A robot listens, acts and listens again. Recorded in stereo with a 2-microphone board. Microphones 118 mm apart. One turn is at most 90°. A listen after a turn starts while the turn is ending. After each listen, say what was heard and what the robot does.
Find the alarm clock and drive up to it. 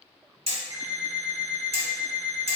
Turn 30° right.
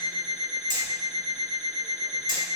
So it is at 15° left. Turn 15° left.
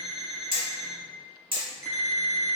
Drive 1.0 m forward.
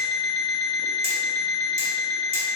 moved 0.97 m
The alarm clock is now 10° left. Turn 10° left.
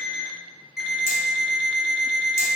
Drive 1.0 m forward.
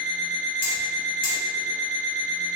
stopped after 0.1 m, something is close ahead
Arrived at the alarm clock, straight ahead.